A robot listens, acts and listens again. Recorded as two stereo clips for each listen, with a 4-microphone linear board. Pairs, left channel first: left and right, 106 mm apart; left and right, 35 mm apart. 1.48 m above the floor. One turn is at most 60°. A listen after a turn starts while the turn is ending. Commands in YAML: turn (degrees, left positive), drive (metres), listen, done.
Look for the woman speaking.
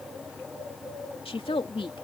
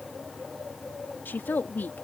turn: 60
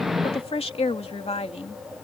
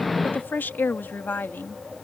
turn: 60
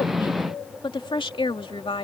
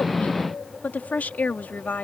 turn: 55
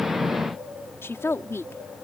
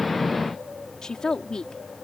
turn: 25
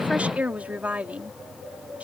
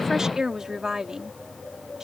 turn: -15
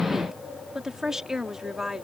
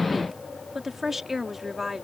done: "Facing the woman speaking."